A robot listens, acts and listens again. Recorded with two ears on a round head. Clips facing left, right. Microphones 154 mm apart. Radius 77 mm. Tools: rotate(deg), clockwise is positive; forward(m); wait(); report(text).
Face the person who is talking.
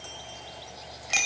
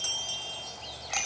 wait()
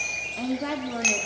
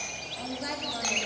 rotate(-55)
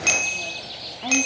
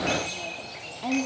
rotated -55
wait()
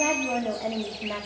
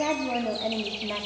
report("Found it: a woman speaking, straight ahead, 2 to 4 m away.")